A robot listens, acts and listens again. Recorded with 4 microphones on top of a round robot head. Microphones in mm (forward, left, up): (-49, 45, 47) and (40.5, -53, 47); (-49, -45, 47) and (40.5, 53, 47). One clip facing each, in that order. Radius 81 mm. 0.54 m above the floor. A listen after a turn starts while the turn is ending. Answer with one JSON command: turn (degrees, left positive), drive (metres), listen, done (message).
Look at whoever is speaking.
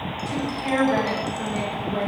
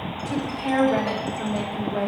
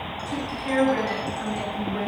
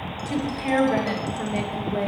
{"turn": 35}
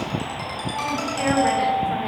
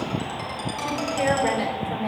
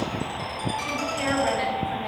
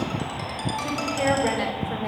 {"done": "Found it: a woman speaking, straight ahead, 2 to 4 m away."}